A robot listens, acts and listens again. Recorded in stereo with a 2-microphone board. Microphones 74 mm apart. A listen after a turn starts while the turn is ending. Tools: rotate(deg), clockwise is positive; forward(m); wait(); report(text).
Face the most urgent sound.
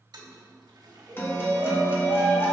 rotate(55)
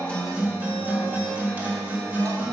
wait()
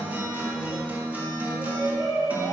rotate(75)
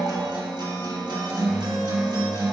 wait()
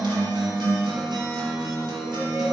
wait()
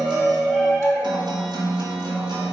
rotate(-10)
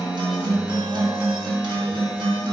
wait()
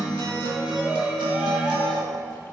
report("Found it: a shout, straight ahead, 2 to 4 m away.")